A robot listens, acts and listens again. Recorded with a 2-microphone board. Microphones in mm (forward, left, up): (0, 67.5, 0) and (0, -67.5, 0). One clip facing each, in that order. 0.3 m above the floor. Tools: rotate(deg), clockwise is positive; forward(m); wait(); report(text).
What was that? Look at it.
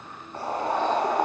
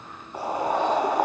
rotate(30)
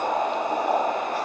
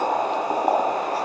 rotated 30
rotate(135)
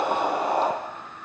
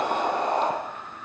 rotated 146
rotate(-10)
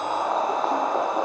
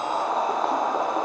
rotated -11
report("Facing the boiling, 2 to 4 m away.")